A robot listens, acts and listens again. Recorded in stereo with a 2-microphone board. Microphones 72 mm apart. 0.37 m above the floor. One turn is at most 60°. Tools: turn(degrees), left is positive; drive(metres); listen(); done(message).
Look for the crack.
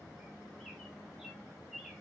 listen()
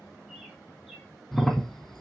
turn(degrees=30)
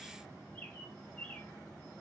listen()
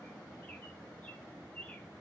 done("I heard a crack, but can't make it out now. It was about 25° right or 145° left.")